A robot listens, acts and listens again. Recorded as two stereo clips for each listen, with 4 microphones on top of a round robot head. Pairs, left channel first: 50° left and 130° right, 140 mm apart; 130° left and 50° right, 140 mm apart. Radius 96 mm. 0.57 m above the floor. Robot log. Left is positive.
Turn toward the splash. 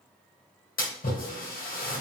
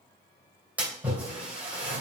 note: The splash: 30° left.
cmd yaw +30
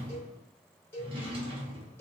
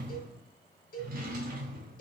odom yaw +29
end: I heard a splash from this way, but can't make it out now.